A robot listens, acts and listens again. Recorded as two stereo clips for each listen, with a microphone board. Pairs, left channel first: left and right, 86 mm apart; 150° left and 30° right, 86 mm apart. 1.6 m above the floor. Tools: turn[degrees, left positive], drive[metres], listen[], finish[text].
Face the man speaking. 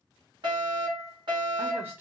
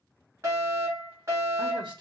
Thought: The man speaking: 25° right.
Action: turn[-25]
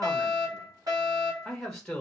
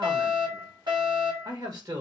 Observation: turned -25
Action: finish[Facing the man speaking, 1 to 2 m away.]